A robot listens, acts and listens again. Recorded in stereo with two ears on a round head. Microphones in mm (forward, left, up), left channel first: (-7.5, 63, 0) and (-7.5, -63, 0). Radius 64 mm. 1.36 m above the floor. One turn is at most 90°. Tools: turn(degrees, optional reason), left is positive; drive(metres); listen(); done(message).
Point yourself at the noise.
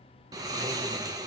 turn(degrees=-25, reason="The snoring: about 25° right or 155° right.")
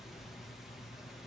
done("Facing the snoring.")